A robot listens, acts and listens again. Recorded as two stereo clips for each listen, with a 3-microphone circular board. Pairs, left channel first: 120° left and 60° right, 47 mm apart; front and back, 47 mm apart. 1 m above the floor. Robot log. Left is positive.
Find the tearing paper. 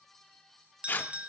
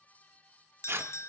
note: The tearing paper: 165° left.
cmd yaw +165
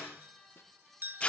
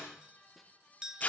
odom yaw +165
note: The tearing paper is now 55° left.
cmd yaw +55
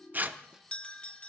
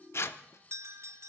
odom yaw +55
note: The tearing paper is now 15° right.
cmd yaw -15
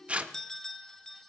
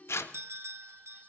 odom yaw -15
end: Found it: tearing paper, straight ahead, under 1 m away.